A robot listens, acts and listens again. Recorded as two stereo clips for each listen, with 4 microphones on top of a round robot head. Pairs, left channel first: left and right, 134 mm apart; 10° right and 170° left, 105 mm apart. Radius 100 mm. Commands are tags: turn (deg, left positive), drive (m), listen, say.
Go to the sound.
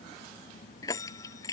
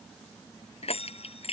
<turn deg="20"/>
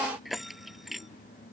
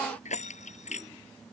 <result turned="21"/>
<drive m="1.0"/>
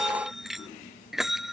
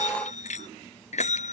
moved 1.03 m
<drive m="1.0"/>
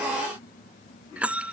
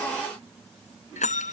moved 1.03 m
<turn deg="-10"/>
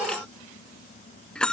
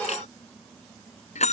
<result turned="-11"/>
<drive m="1.0"/>
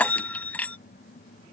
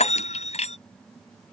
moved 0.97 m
<turn deg="10"/>
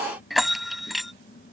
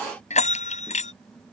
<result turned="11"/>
<drive m="1.0"/>
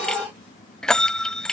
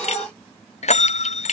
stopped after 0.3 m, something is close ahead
<say>Arrived at the bell, straight ahead.</say>